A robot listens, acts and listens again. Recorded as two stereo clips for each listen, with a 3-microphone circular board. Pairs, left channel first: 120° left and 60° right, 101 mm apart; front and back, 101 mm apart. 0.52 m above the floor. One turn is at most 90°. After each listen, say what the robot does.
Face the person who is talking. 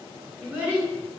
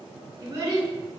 Turn 90° right.
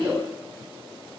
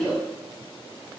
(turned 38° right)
Turn 90° right.
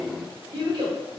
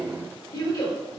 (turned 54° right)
Turn 35° right.
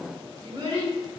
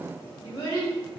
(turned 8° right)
Turn 25° right.
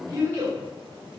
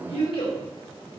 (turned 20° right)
Found it: a child speaking, straight ahead.